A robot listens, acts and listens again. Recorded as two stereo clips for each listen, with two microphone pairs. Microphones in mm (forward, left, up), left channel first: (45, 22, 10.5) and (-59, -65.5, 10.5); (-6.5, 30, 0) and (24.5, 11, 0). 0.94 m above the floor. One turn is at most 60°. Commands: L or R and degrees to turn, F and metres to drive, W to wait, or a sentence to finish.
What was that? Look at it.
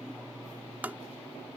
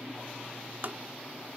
R60
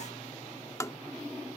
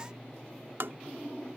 R30
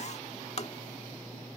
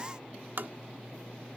Found it: tapping, straight ahead.